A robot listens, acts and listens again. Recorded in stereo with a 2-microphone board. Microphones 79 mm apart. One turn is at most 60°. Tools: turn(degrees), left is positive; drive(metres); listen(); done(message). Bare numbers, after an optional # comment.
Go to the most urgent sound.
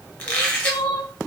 turn(60)
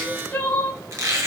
# So it is at 25° left.
turn(25)
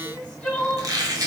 # The crying is now 10° left.
turn(10)
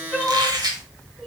drive(1.0)
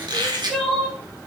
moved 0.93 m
drive(1.0)
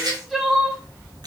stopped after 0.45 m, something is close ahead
done("Arrived at the crying, straight ahead.")